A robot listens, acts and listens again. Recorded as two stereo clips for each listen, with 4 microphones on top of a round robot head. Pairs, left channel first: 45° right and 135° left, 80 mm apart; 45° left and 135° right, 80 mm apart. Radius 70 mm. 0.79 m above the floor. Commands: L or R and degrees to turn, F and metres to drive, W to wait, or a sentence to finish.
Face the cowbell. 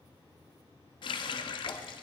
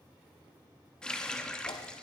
W
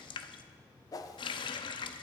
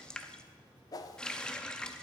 W
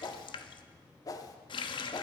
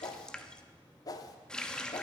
I can't make out a cowbell to turn to.